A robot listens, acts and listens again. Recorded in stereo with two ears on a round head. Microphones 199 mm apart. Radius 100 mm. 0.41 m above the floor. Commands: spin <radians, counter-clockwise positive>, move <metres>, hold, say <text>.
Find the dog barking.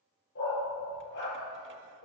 spin 0.87
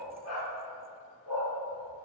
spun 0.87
spin 1.48
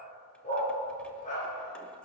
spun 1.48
spin 0.61
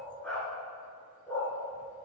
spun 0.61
say Facing the dog barking.